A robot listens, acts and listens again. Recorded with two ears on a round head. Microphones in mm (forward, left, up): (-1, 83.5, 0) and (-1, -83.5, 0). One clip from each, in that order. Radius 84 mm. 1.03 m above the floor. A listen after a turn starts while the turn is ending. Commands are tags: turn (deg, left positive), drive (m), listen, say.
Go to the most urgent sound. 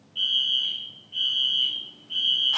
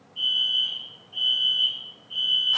<turn deg="70"/>
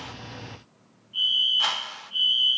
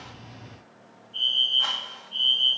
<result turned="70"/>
<turn deg="20"/>
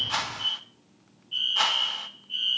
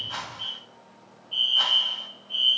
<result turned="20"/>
<drive m="1.0"/>
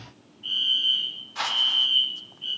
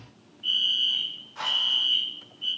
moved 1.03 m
<turn deg="-10"/>
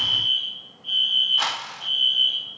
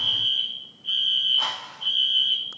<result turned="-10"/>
<drive m="1.0"/>
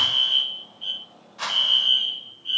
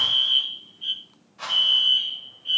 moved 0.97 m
<drive m="1.0"/>
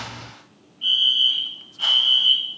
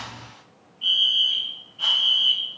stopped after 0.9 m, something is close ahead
<say>Arrived at the fire alarm, straight ahead.</say>